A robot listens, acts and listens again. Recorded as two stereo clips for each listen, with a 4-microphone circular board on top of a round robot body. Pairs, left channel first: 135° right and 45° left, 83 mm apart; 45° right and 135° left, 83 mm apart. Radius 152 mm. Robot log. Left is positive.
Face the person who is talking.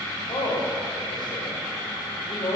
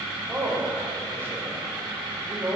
note: The man speaking: 160° right.
cmd yaw -160
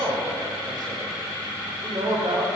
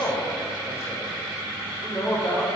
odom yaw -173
note: The man speaking is now 10° left.
cmd yaw +10
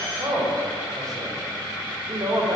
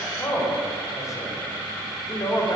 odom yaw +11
end: Found it: a man speaking, straight ahead.